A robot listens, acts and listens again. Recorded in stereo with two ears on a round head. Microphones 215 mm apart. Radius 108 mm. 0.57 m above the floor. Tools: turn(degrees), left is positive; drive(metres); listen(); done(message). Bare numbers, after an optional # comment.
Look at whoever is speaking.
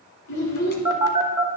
turn(90)
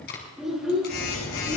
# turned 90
done("Found it: a child speaking, straight ahead.")